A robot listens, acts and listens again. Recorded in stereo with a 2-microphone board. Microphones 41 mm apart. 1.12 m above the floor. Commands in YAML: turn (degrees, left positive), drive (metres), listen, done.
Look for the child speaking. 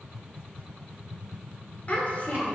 turn: 40
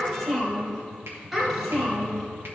done: "Facing the child speaking, 2 to 4 m away."